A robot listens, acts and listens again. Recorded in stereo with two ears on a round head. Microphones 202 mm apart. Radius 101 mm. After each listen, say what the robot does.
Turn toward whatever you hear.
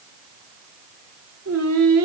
Turn 70° right.
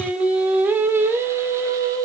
Turn 15° right.
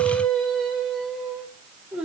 Found it: singing, straight ahead, 2 to 4 m away.